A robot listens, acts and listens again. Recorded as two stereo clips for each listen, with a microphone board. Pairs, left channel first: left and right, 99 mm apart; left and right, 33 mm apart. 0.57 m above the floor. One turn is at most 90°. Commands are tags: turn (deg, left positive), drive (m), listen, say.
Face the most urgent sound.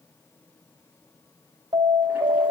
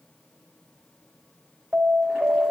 <turn deg="-75"/>
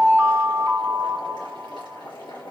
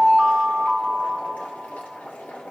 <turn deg="-10"/>
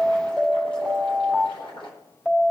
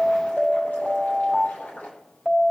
<say>Found it: an alarm, straight ahead, 2 to 4 m away.</say>